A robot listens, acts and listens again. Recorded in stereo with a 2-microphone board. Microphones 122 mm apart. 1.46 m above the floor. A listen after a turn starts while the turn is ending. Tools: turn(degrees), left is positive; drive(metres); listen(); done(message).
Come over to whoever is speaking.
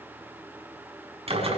listen()
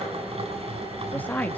turn(degrees=30)
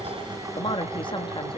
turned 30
turn(degrees=140)
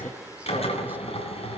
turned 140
listen()
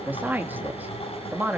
turn(degrees=-15)
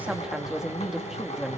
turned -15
drive(metres=1.0)
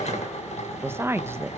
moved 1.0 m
turn(degrees=-20)
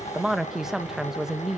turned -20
drive(metres=1.0)
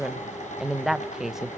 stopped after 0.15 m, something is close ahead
done("Arrived at the woman speaking, straight ahead.")